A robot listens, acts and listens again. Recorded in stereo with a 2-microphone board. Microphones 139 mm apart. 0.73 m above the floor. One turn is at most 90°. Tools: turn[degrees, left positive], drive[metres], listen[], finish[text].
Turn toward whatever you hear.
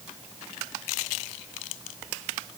Action: listen[]
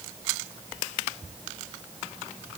Action: listen[]
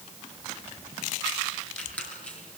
Action: turn[30]
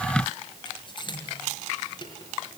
Thought: So it is at 145° left.
Action: turn[90]
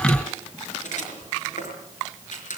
Thought: The squeak is now 65° left.
Action: turn[65]
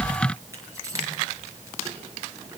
Thought: The squeak is now 25° right.
Action: turn[-25]
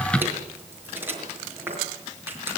Thought: The squeak is now 15° right.
Action: turn[-15]
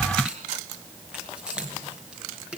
Thought: The squeak is now 10° right.
Action: turn[-10]
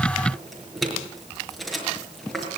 Action: finish[Facing the squeak.]